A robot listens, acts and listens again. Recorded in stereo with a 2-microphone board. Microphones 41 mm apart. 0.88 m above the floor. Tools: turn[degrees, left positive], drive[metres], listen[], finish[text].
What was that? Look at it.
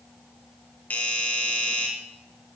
Thought: The doorbell: about 40° left or 140° left.
Action: turn[40]
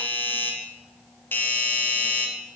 Thought: So it is at 90° left.
Action: turn[90]
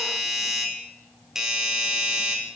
Thought: The doorbell is now 15° right.
Action: turn[-15]
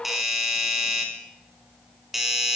Action: finish[Found it: a doorbell, straight ahead, 2 to 4 m away.]